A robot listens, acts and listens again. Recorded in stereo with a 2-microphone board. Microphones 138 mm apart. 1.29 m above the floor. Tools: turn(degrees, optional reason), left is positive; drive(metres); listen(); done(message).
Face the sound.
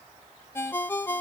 turn(degrees=15, reason="The ringtone: about 15° left or 165° left.")
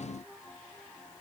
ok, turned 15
listen()
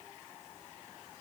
listen()
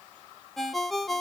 done("Found it: a ringtone, straight ahead, under 1 m away.")